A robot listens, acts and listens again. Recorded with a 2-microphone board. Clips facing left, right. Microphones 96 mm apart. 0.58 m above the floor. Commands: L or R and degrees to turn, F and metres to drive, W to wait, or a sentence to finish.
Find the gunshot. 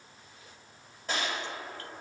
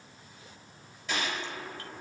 L40
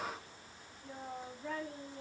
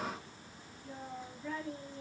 W
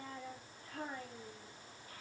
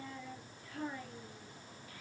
I heard a gunshot, but can't make it out now. It was about straight ahead or 100° left.